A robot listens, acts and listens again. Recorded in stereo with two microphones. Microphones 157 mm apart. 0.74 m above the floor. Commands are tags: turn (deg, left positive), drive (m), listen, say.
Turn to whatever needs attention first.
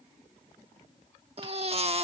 <turn deg="-40"/>
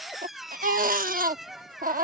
<turn deg="-95"/>
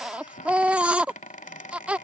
<turn deg="-10"/>
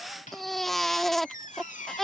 <say>Found it: a baby crying, straight ahead.</say>